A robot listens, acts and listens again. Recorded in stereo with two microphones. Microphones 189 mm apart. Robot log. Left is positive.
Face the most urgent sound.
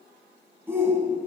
cmd yaw -30
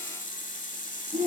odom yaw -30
note: So it is at 135° right.
cmd yaw -135
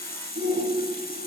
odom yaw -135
note: The shout is now 70° right.
cmd yaw -70
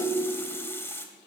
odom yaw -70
note: The shout is now 20° right.
cmd yaw -20
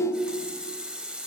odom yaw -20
end: Facing the shout, 2 to 4 m away.